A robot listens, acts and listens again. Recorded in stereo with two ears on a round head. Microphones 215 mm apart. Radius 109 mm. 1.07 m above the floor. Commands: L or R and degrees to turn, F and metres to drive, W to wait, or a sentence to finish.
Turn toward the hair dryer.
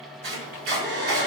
R45
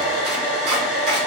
Facing the hair dryer.